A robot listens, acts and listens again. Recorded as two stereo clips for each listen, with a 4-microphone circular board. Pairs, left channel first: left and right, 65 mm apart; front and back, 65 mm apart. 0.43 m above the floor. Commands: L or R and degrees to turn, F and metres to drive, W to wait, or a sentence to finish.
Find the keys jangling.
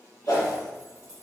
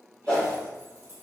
L55
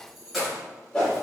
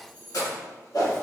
Found it: keys jangling, straight ahead.